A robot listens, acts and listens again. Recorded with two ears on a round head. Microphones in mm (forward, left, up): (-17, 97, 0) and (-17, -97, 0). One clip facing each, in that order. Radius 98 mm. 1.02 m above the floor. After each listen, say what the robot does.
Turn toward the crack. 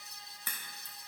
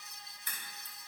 Turn 55° left.
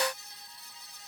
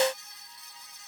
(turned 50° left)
Keep listening.
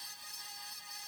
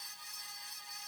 I heard a crack, but can't make it out now. It was about 5° left or 75° left.